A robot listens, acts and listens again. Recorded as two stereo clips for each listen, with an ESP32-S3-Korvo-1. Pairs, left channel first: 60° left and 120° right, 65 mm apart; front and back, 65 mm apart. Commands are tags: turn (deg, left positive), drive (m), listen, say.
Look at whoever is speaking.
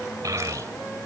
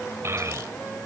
<turn deg="-140"/>
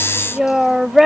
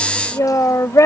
<turn deg="-35"/>
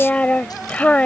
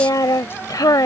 <turn deg="-10"/>
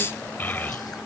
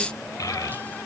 <say>Facing the child speaking.</say>